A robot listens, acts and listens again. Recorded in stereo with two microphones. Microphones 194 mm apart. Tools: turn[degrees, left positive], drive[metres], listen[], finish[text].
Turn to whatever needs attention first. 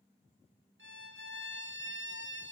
Action: listen[]
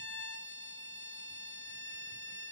Action: listen[]
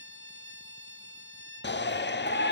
Thought: The shout: about 65° left or 115° left.
Action: turn[65]
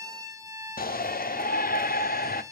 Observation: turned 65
Thought: So it is at 50° left.
Action: turn[50]
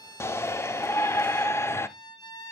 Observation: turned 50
Thought: The shout is now 15° left.
Action: turn[15]
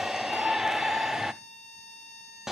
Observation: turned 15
Action: finish[Facing the shout, under 1 m away.]